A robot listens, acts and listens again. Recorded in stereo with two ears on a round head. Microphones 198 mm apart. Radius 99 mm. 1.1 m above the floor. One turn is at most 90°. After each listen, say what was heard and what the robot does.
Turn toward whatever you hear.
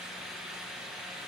Keep listening.
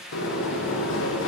The sliding door: about 60° left or 120° left. Turn 60° left.
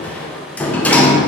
Found it: a sliding door, straight ahead.